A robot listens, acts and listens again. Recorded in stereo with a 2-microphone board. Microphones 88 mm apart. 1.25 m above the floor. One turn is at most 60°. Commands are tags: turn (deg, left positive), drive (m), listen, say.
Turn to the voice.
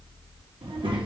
<turn deg="-60"/>
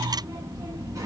<turn deg="-40"/>
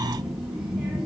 <turn deg="-10"/>
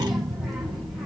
<say>Facing the child speaking.</say>